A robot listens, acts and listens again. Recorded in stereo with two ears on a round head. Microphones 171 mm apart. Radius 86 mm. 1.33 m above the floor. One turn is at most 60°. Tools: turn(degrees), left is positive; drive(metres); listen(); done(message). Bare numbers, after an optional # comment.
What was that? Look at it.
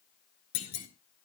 # The clunk: about 45° left or 135° left.
turn(45)
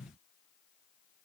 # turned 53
listen()
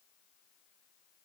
done("I heard a clunk, but can't make it out now. It was about 5° right or 80° left.")